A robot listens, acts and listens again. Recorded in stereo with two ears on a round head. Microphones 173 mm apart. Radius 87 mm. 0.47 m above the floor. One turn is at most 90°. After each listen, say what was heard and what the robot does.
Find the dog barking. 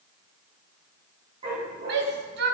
The dog barking: about 30° right or 150° right. Turn 30° right.
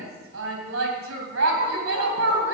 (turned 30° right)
Keep listening.
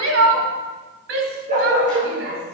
The dog barking: about 40° right or 140° right. Turn 40° right.
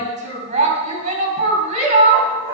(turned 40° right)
So it is at 100° right. Turn 90° right.
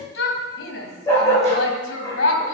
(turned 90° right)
The dog barking is now 15° left. Turn 15° left.
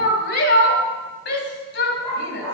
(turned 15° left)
Facing the dog barking, over 4 m away.